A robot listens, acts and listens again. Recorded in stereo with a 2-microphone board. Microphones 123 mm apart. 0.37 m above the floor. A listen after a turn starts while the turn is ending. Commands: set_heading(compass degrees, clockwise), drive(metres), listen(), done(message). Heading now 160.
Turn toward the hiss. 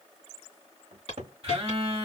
set_heading(100)
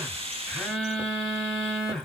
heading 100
listen()
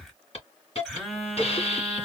set_heading(40)
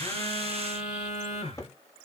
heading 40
listen()
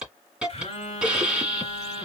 set_heading(50)
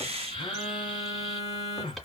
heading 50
listen()
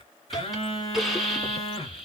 done("Found it: a hiss, straight ahead.")